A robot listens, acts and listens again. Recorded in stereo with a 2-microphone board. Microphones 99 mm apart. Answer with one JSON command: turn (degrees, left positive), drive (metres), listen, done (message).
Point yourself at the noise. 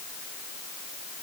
{"listen": true}
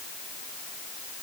{"listen": true}
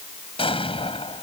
{"turn": 70}
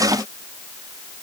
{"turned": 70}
{"listen": true}
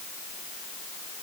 {"done": "I heard an explosion, but can't make it out now. It was about straight ahead or 40° left."}